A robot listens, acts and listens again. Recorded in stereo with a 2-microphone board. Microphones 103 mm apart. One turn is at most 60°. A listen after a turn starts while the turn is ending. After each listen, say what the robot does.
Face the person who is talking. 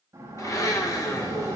Keep listening.
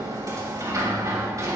Keep listening.
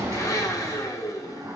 I can't make out anyone speaking to turn to.